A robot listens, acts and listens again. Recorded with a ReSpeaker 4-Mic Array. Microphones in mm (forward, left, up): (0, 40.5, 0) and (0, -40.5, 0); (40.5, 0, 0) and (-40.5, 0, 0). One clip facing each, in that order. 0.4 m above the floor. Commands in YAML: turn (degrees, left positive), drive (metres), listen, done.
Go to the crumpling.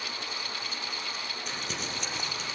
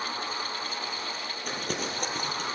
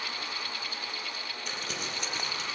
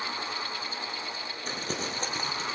turn: -130
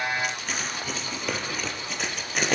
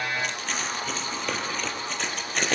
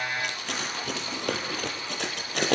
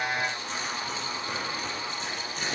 drive: 1.0
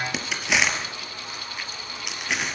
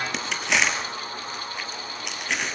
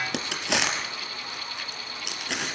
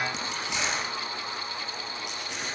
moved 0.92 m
drive: 1.0
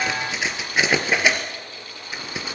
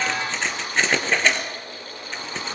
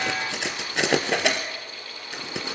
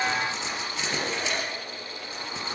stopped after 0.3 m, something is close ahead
turn: 10
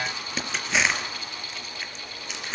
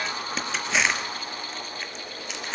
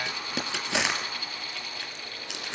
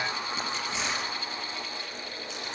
done: "Blocked. The crumpling is further on, straight ahead."